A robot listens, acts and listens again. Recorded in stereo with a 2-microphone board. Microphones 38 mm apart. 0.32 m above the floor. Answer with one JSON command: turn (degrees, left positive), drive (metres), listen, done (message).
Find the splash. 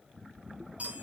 {"listen": true}
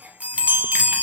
{"listen": true}
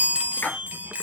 {"turn": 70}
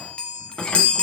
{"listen": true}
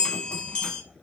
{"done": "I heard a splash, but can't make it out now. It was about straight ahead or 40° left."}